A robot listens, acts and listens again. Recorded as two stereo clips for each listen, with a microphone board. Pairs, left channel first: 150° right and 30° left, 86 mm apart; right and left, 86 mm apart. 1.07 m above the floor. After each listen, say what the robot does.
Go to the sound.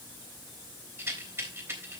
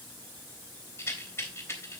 Turn 30° right.
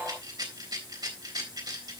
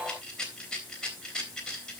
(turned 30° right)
Turn 10° right.
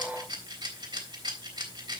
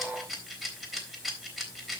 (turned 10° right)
Drive 1.0 m forward.
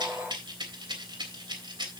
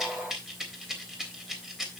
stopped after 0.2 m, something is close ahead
Something is in my way. I am facing the rattle but have not reached it.